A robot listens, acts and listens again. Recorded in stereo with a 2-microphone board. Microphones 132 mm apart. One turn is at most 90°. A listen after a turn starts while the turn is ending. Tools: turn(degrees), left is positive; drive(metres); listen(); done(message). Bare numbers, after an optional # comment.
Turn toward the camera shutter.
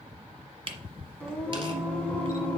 # The camera shutter: about 45° right or 135° right.
turn(-45)
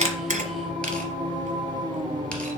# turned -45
listen()
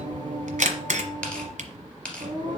# So it is at 85° right.
turn(-85)
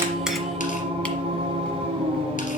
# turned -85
listen()
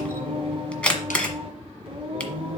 # The camera shutter is now 10° left.
turn(10)
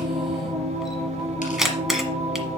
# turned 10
done("Facing the camera shutter, 1 to 2 m away.")